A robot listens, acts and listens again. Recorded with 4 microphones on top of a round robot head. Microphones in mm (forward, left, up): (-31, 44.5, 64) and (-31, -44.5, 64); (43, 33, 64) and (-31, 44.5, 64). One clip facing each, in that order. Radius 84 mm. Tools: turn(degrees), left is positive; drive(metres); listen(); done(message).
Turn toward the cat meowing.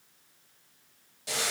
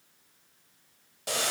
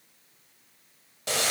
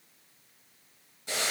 listen()
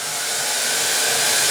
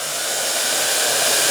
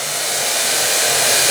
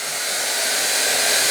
listen()
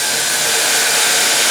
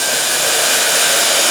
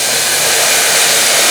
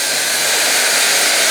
done("I can't make out a cat meowing, only boiling.")